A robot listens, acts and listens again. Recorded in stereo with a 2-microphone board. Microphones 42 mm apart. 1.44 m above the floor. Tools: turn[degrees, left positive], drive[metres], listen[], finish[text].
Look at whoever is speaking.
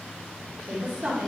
Thought: The woman speaking: about 35° right or 145° right.
Action: turn[-35]
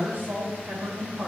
Thought: The woman speaking: about 45° right or 135° right.
Action: turn[-45]
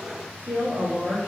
Thought: So it is at 125° right.
Action: turn[-125]
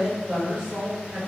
Thought: The woman speaking is now 15° right.
Action: turn[-15]
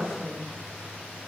Action: finish[Found it: a woman speaking, straight ahead, 1 to 2 m away.]